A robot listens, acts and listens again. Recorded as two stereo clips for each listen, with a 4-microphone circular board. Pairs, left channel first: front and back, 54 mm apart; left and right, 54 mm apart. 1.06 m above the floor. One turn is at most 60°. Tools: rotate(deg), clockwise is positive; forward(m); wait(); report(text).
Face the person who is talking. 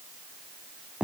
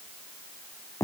wait()
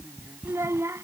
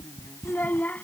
rotate(-60)
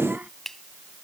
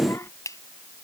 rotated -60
rotate(-60)
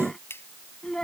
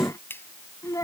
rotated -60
rotate(-60)
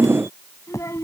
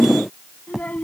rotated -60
rotate(-30)
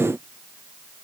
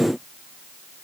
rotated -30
wait()
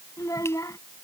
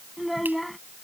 report("Found it: a child speaking, straight ahead.")